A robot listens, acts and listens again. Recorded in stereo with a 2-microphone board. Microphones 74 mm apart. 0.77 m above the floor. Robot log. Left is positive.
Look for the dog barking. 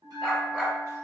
cmd yaw +30
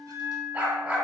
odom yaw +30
note: So it is at 25° right.
cmd yaw -25
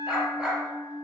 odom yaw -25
note: The dog barking is now 10° right.
cmd yaw -10
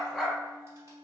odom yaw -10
end: Found it: a dog barking, straight ahead, 1 to 2 m away.